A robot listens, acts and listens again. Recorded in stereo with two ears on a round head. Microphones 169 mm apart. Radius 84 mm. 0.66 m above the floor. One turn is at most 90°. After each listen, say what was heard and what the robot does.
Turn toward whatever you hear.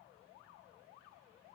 Keep listening.
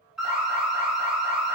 Turn 30° right.
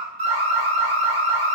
So it is at 145° right. Turn 90° right.
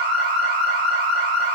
The alarm is now 50° right. Turn 50° right.
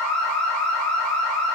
Facing the alarm, 1 to 2 m away.